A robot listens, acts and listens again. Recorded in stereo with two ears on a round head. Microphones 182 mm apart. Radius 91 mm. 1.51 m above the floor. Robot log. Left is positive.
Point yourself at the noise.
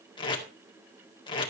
note: The tape being pulled: about 25° left or 155° left.
cmd yaw +25
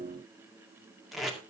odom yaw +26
end: Facing the tape being pulled.